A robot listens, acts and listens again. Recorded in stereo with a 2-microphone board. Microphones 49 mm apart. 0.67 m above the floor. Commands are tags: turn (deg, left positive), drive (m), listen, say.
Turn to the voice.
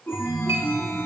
<listen/>
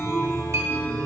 <listen/>
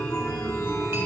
<say>I can't make out anyone speaking, only a chime.</say>